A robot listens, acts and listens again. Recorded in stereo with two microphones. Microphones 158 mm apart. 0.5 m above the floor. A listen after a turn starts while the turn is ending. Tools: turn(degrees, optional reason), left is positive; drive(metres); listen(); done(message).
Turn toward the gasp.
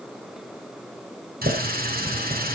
listen()
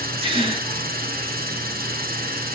turn(degrees=-35, reason="The gasp: about 35° right or 145° right.")
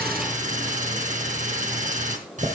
listen()
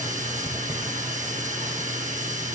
done("I heard a gasp, but can't make it out now. It was about straight ahead or 110° right.")